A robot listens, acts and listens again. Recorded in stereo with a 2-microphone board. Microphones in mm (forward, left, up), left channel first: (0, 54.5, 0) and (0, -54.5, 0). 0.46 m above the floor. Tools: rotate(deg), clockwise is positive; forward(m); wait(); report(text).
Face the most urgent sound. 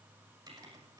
wait()
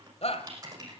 rotate(-65)
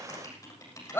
rotate(-20)
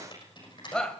report("Facing the shout.")